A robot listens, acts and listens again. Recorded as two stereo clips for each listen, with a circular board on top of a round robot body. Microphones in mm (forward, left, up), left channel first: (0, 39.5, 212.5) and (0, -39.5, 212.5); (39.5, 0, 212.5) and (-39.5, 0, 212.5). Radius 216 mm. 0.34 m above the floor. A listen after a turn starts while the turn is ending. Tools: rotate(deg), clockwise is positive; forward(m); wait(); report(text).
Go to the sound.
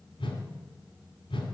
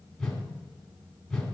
rotate(-85)
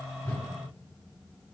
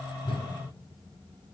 wait()
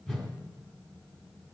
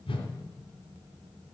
rotate(-10)
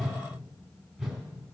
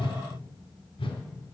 forward(1.0)
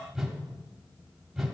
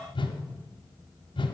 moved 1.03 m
forward(1.0)
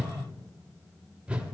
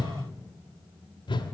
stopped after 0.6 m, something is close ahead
rotate(15)
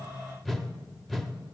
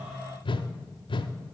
report("I am next to the whoosh.")